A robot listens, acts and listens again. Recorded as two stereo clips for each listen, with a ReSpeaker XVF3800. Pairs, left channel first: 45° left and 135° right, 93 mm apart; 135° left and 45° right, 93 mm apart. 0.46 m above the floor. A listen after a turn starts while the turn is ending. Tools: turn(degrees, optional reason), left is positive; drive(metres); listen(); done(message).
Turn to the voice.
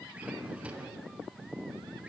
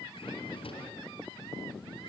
listen()
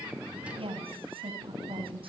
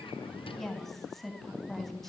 turn(degrees=-140, reason="The woman speaking: 140° right.")
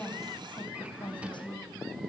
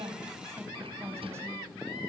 turn(degrees=15, reason="The woman speaking is now 15° left.")
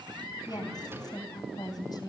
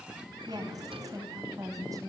done("Found it: a woman speaking, straight ahead, 2 to 4 m away.")